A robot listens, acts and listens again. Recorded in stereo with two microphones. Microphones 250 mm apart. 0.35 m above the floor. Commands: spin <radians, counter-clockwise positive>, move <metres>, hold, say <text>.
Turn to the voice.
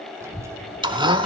spin -0.52
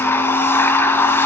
hold
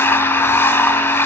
hold
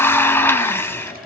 say I heard a child speaking, but can't make it out now. It was about 20° left or 140° right.